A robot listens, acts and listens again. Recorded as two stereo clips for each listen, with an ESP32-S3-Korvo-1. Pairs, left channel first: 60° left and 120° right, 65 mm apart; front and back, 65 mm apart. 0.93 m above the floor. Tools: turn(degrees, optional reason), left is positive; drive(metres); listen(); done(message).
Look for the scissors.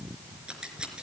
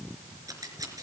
turn(degrees=165, reason="The scissors: 165° left.")
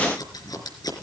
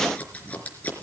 turn(degrees=65, reason="The scissors is now 65° left.")
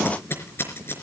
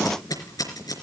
turn(degrees=10, reason="The scissors is now 10° left.")
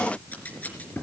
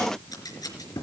done("Found it: scissors, straight ahead.")